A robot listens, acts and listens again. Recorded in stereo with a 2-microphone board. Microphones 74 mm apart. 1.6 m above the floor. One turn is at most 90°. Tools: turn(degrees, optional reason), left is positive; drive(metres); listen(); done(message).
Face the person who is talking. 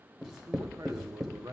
turn(degrees=-45, reason="The man speaking: about 45° right or 135° right.")
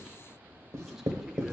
listen()
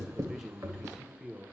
done("Found it: a man speaking, straight ahead.")